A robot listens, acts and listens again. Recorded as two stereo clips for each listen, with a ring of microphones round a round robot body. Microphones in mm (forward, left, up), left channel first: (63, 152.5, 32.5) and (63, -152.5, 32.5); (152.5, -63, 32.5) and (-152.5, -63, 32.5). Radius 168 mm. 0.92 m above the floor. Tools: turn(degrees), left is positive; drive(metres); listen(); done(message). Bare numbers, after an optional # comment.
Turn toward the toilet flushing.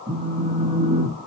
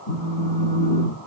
listen()
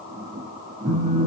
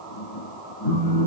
listen()
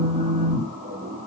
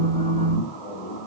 done("I can't make out a toilet flushing to turn to.")